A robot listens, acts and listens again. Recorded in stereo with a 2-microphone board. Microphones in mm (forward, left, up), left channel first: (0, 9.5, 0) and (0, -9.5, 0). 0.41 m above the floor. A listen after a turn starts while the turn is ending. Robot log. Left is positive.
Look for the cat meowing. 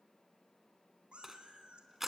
note: The cat meowing: about 60° right or 120° right.
cmd yaw -60
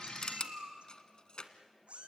note: So it is at 80° right.
cmd yaw -80
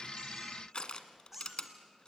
note: The cat meowing is now 10° right.
cmd yaw -10
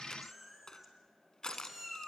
note: The cat meowing is now 10° right.
cmd yaw -10
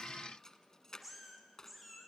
end: Facing the cat meowing, 2 to 4 m away.